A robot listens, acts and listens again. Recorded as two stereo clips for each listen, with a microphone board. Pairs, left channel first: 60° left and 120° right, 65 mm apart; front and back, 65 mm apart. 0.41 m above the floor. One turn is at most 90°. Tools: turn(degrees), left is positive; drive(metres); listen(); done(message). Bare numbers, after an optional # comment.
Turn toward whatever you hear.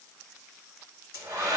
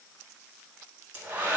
# The hair dryer: 120° right.
turn(-90)
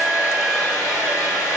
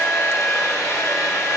# The hair dryer is now 45° right.
turn(-45)
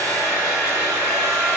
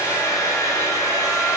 done("Found it: a hair dryer, straight ahead, 1 to 2 m away.")